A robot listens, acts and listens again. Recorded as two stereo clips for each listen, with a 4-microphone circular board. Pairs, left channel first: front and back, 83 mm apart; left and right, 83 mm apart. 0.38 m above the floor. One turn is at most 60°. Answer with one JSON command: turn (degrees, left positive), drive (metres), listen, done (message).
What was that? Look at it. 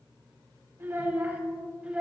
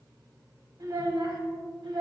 {"turn": -60}
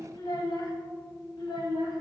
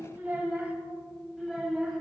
{"done": "Found it: a child speaking, straight ahead."}